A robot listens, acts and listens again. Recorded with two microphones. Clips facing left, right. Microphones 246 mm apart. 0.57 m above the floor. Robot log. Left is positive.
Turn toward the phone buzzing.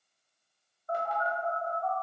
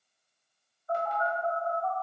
note: The phone buzzing: about 55° left or 125° left.
cmd yaw +55
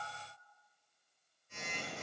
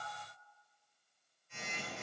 note: So it is at 55° left.
cmd yaw +55
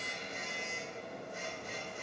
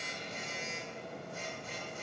note: The phone buzzing is now 20° left.
cmd yaw +20
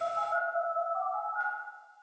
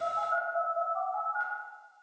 end: Facing the phone buzzing.